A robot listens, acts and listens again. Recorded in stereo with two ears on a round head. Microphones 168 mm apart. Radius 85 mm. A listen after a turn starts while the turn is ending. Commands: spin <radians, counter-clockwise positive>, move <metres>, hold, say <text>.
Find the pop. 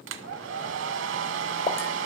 spin 0.52
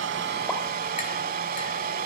hold
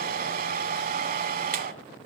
say I heard a pop, but can't make it out now. It was about straight ahead or 120° left.